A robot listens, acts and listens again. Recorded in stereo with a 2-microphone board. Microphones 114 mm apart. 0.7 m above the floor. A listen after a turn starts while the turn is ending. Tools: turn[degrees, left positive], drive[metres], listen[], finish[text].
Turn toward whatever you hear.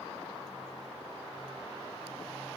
Action: listen[]
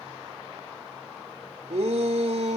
Thought: The shout: about 70° right or 110° right.
Action: turn[-70]
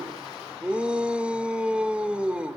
Thought: So it is at 10° right.
Action: turn[-10]
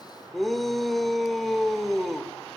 Action: finish[Found it: a shout, straight ahead, 1 to 2 m away.]